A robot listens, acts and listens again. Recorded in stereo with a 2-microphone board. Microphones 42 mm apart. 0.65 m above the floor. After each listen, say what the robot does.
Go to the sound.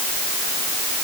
Keep listening.
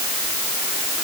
Keep listening.
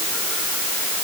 I can't make out anything.